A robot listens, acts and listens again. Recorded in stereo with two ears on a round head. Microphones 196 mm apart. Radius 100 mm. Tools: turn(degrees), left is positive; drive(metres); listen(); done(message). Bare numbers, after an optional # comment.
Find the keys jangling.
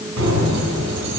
turn(-90)
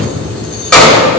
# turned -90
done("Facing the keys jangling.")